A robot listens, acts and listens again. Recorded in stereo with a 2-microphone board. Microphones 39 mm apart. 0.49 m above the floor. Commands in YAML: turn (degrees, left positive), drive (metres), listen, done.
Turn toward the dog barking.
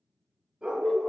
turn: -20
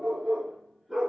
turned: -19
done: "Facing the dog barking."